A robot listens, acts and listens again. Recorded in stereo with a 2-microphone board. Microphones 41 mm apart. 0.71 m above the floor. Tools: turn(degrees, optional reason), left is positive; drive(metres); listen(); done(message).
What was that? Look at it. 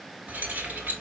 turn(degrees=-50, reason="The keys jangling: about 50° right or 130° right.")
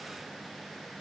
listen()
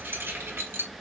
turn(degrees=-80, reason="So it is at 80° right.")
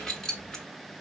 turn(degrees=20, reason="The keys jangling is now 20° left.")
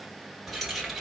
done("Found it: keys jangling, straight ahead, 1 to 2 m away.")